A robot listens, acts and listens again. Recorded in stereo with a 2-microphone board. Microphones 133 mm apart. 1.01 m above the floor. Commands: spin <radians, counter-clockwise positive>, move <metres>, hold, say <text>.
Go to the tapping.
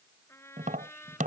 spin -1.57
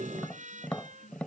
spin 0.17
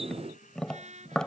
move 1.0
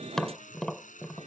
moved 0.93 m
move 1.0
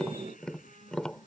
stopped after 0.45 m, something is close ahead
say Something is in my way. I am facing the tapping but have not reached it.